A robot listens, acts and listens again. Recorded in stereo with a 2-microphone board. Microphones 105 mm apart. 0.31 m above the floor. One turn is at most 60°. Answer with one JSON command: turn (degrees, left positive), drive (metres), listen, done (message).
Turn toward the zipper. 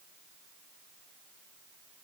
{"listen": true}
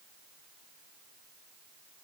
{"listen": true}
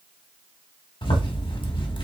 {"turn": 60}
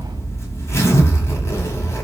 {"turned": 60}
{"turn": 30}
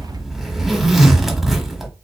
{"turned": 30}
{"done": "Found it: a zipper, straight ahead."}